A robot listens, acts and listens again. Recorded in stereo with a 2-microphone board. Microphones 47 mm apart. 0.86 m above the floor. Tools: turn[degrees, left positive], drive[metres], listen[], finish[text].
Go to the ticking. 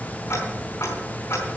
Action: turn[90]
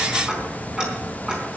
Thought: So it is at 10° right.
Action: turn[-10]
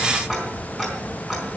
Action: drive[1.0]
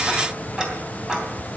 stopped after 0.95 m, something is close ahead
Thought: The ticking is now 15° right.
Action: turn[-15]
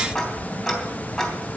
Action: finish[Blocked. The ticking is further on, straight ahead.]